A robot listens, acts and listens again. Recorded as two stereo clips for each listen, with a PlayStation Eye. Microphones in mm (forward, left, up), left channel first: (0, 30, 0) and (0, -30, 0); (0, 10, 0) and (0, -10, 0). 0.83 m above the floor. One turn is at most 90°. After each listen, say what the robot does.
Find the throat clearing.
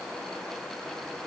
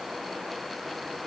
Keep listening.
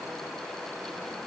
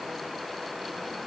Keep listening.
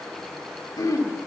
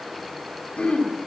Turn 90° left.
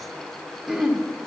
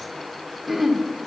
Turn 10° right.
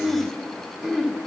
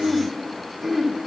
Found it: throat clearing, straight ahead.